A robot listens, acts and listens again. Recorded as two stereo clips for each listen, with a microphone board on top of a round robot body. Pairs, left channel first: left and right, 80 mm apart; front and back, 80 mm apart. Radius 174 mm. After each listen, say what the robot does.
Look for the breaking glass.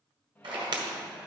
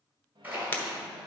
Turn 65° right.
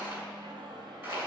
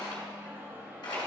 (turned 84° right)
Turn 20° left.
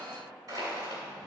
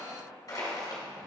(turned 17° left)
I heard breaking glass from this way, but can't make it out now.